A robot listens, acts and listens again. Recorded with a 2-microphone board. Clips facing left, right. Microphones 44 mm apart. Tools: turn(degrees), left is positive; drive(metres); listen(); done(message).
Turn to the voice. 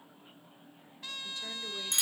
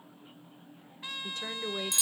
turn(degrees=-65)
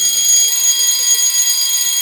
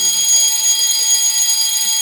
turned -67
listen()
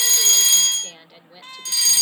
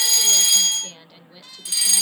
done("Facing the woman speaking, 2 to 4 m away.")